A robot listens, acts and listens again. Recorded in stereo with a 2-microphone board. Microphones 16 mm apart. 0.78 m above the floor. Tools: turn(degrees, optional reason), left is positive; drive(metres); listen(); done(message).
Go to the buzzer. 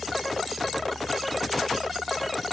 listen()
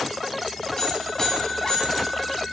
turn(degrees=50, reason="The buzzer: about 50° left or 130° left.")
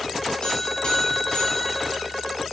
turn(degrees=80, reason="So it is at 80° left.")
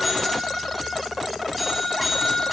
drive(metres=1.0)
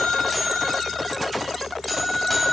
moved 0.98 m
drive(metres=1.0)
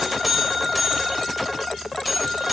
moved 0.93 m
drive(metres=1.0)
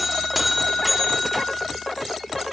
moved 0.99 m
turn(degrees=-10, reason="The buzzer is now 10° right.")
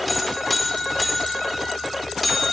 drive(metres=1.0)
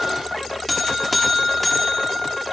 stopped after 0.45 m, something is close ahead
done("Arrived at the buzzer, straight ahead.")